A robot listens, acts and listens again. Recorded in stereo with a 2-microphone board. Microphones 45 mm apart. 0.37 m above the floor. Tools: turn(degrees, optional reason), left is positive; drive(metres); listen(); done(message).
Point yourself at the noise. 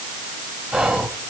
turn(degrees=-30)
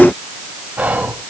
turn(degrees=-140, reason="So it is at 140° right.")
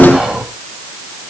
turn(degrees=-20, reason="The whispering is now 20° right.")
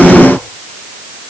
listen()
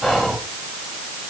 done("Facing the whispering, 1 to 2 m away.")